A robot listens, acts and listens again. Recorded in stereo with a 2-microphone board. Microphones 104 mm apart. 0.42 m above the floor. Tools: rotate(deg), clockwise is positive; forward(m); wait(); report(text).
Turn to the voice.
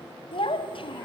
rotate(-60)
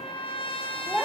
report("Facing the child speaking, 1 to 2 m away.")